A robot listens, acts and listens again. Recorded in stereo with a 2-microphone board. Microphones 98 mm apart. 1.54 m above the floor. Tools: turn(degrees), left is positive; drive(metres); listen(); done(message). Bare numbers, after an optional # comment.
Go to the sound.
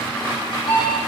# The alarm clock: about 60° left or 120° left.
turn(60)
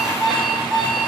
drive(1.0)
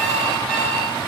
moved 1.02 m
drive(1.0)
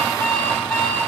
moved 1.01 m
# The alarm clock is now 10° left.
turn(10)
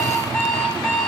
drive(1.0)
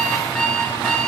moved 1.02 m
# The alarm clock is now 10° left.
turn(10)
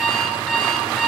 drive(1.0)
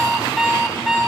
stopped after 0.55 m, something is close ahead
done("Arrived at the alarm clock, straight ahead.")